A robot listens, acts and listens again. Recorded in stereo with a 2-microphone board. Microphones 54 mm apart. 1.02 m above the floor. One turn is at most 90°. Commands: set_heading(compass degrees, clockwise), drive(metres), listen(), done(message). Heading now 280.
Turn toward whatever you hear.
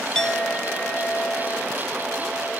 set_heading(250)
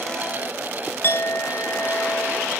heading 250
set_heading(160)
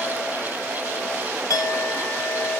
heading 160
set_heading(80)
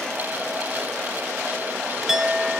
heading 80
set_heading(90)
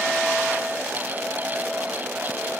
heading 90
listen()
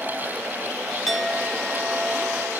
done("Found it: a clink, straight ahead.")